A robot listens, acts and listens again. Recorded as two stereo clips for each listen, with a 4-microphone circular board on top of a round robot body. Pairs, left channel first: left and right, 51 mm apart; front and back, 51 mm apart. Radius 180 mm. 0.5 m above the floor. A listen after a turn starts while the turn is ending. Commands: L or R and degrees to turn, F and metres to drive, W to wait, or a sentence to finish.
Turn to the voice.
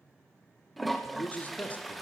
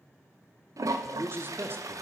L145
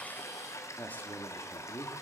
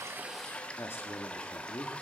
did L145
L35
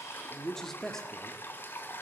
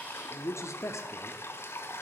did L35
L10
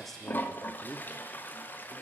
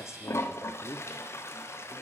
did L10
Facing the man speaking.